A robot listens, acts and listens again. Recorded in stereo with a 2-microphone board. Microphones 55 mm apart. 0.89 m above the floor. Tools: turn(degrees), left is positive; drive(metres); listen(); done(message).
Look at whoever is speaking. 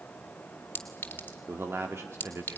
turn(degrees=-55)
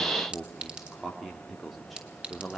done("Facing the man speaking.")